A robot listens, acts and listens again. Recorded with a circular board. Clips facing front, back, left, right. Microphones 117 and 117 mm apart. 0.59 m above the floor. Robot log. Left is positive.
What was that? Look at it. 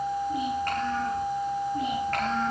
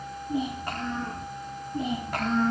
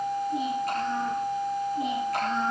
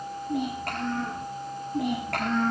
note: The child speaking: 100° right.
cmd yaw -100
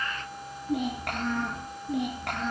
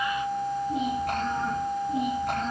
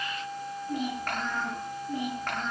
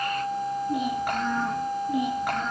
note: The child speaking is now 10° right.
cmd yaw -10
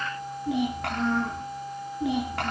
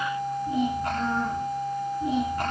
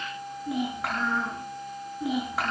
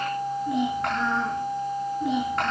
end: Found it: a child speaking, straight ahead, over 4 m away.